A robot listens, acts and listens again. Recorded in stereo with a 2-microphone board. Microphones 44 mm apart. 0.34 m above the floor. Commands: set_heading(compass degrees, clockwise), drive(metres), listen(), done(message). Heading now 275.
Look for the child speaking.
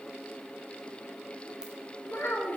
set_heading(225)
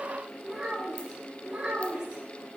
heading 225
set_heading(250)
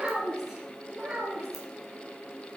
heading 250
set_heading(265)
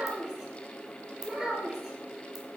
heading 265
done("Found it: a child speaking, straight ahead, 2 to 4 m away.")